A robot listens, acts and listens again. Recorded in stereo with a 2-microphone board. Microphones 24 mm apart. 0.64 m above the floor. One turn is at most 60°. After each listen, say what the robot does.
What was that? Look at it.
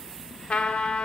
Turn 55° left.
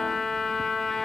Turn 15° left.
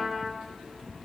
Found it: a trumpet, straight ahead, 1 to 2 m away.